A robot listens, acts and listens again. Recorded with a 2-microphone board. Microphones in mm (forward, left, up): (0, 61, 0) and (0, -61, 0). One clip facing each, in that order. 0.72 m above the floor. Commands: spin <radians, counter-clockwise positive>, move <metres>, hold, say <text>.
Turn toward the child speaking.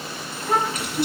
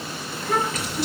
spin 0.52
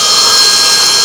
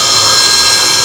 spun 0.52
hold
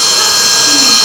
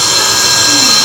hold
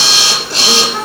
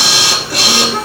say I heard a child speaking, but can't make it out now. It was about straight ahead or 120° left.